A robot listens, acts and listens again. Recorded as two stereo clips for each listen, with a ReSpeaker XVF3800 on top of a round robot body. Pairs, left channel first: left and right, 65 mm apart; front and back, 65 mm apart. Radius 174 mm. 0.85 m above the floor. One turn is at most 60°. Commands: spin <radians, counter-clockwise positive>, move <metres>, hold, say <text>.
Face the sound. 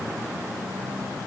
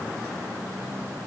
hold
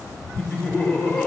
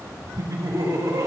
spin 1.05
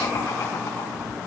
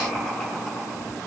spin 1.05
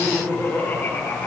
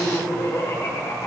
spin 0.44
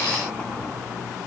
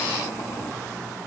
hold
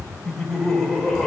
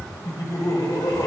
say Found it: laughter, straight ahead.